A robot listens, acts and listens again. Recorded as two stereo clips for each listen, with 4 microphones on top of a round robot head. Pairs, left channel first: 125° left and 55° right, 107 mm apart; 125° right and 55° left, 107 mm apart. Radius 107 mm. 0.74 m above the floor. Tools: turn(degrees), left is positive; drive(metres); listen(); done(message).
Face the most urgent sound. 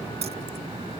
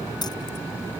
listen()
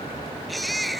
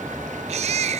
turn(degrees=35)
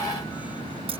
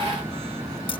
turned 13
turn(degrees=25)
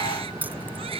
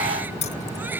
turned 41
turn(degrees=-20)
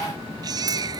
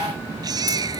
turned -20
done("Found it: a baby crying, straight ahead.")